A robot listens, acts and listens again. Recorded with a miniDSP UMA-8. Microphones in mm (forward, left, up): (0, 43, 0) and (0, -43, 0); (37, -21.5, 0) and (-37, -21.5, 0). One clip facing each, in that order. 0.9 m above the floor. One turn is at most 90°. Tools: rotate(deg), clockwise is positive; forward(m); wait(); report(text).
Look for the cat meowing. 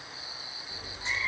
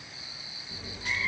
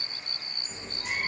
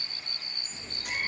rotate(-20)
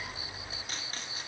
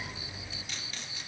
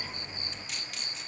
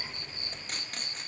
rotate(-10)
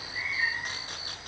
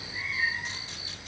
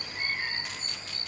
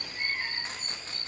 report("Found it: a cat meowing, straight ahead, 2 to 4 m away.")